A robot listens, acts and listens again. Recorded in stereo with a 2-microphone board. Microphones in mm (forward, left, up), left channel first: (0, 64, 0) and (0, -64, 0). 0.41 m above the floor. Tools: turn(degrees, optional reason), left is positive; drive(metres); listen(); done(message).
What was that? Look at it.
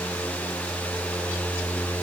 listen()
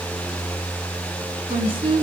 turn(degrees=-50, reason="The woman speaking: about 50° right or 130° right.")
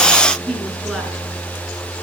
done("Found it: a woman speaking, straight ahead.")